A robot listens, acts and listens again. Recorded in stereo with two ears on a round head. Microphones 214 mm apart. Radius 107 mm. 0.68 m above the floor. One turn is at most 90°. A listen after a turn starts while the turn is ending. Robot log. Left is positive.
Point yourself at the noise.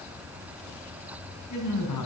cmd yaw +90
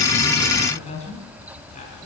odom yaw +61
note: So it is at 30° left.
cmd yaw +30
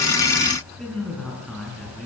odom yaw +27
end: Found it: a man speaking, straight ahead.